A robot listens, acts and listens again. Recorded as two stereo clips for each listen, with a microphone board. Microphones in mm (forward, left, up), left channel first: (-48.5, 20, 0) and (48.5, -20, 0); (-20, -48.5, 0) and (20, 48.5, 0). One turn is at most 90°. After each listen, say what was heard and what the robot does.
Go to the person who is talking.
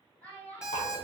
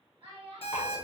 The child speaking: 85° left. Turn 85° left.
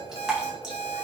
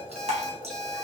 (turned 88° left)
Keep listening.
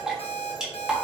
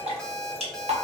Keep listening.
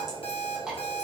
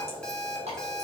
I heard a child speaking from this way, but can't make it out now. I did not reach it.